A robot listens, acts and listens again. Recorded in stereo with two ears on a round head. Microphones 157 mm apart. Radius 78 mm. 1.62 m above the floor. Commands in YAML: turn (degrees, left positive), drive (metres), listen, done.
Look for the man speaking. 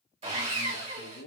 turn: 65
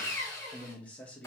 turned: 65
turn: 10
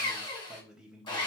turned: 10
done: "Facing the man speaking, 1 to 2 m away."